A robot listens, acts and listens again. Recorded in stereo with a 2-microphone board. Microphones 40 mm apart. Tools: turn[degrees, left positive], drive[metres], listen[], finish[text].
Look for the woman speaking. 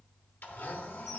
Action: listen[]
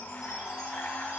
Action: listen[]
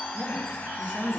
Thought: The woman speaking: about 35° right or 145° right.
Action: turn[-35]
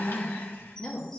Thought: So it is at 25° left.
Action: turn[25]
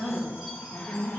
Thought: The woman speaking is now 15° left.
Action: turn[15]
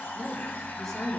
Action: finish[Facing the woman speaking.]